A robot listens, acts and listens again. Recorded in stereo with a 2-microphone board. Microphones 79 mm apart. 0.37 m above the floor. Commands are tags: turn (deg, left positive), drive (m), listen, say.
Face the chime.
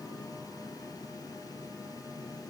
<listen/>
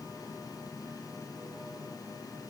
<listen/>
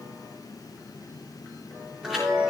<turn deg="-30"/>
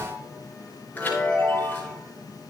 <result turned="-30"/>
<turn deg="25"/>
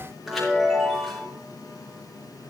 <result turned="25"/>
<say>Facing the chime, over 4 m away.</say>